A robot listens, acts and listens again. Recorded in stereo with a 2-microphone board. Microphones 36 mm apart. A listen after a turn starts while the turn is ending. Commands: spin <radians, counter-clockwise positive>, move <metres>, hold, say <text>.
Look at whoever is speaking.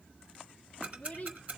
spin 0.70
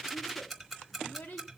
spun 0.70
spin 2.01
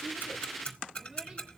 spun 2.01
hold
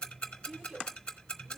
spin -0.35
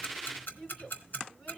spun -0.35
spin 0.26
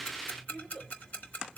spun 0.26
say Found it: a child speaking, straight ahead, 2 to 4 m away.